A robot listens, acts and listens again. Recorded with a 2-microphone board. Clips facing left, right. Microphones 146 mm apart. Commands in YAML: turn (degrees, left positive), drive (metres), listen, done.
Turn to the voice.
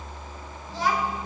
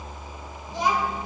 turn: -20
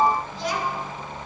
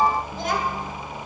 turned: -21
turn: -125
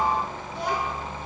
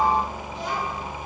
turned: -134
turn: 65
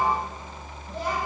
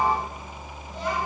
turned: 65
turn: 35
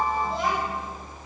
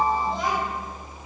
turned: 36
done: "Found it: a child speaking, straight ahead."